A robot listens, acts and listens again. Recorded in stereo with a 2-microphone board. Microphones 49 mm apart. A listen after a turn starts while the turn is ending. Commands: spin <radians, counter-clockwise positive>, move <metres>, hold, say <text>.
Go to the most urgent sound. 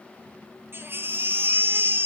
spin -0.87
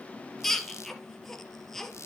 move 1.0
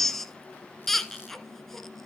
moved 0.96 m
move 1.0
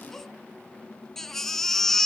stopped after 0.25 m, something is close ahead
say I am next to the baby crying.